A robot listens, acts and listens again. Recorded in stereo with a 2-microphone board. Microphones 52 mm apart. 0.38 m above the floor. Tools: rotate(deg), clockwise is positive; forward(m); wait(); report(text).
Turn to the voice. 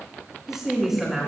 rotate(30)
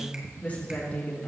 rotate(-30)
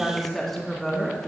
rotate(-10)
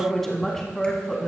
rotate(-15)
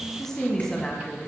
rotate(-15)
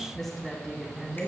report("Facing the woman speaking.")